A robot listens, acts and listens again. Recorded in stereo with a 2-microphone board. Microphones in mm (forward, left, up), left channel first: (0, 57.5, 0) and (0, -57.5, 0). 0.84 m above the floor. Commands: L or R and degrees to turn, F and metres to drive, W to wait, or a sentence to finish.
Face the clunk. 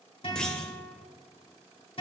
L30
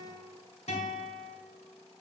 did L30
W
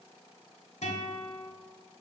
I heard a clunk, but can't make it out now. It was about 25° right or 145° left.